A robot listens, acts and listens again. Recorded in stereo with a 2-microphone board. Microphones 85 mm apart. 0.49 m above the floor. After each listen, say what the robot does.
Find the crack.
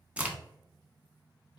Turn 15° right.
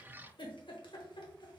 Keep listening.
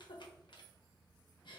I heard a crack, but can't make it out now. It was about straight ahead or 150° right.